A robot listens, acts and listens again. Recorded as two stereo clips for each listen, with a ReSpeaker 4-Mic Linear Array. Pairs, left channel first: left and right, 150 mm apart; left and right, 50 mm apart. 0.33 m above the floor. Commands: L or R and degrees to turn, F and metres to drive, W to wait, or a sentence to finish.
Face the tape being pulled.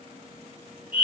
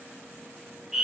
W
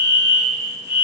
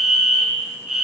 W
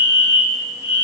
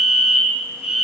I can't make out tape being pulled to turn to.